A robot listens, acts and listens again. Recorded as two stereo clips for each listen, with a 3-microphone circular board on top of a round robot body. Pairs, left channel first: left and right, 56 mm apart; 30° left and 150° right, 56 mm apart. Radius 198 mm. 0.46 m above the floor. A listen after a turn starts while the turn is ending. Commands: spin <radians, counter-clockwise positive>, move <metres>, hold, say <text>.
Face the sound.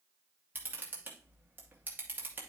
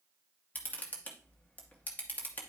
spin -0.52
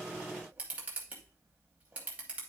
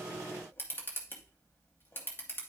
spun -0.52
spin -0.44
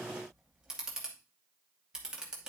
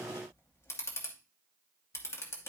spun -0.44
spin -0.17
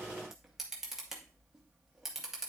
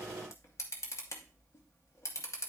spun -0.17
say Facing the camera shutter, under 1 m away.